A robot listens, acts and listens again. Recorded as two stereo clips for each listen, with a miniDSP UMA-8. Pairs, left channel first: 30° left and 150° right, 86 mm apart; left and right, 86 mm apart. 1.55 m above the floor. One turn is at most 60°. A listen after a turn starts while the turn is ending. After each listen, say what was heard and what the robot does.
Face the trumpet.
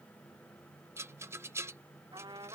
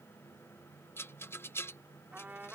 The trumpet: 160° right. Turn 60° right.
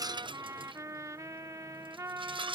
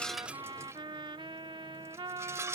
The trumpet is now 100° right. Turn 60° right.
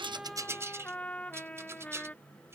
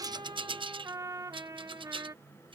The trumpet is now 45° right. Turn 45° right.
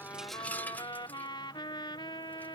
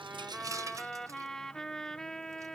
Facing the trumpet.